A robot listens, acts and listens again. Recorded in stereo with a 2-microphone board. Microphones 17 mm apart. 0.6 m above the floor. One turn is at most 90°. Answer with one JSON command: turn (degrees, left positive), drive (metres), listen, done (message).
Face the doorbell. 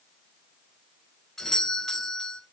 {"turn": 25}
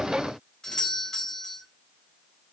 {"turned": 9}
{"turn": 30}
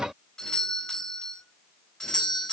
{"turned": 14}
{"turn": 90}
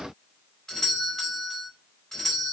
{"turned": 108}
{"turn": 25}
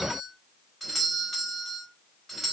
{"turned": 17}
{"done": "Facing the doorbell."}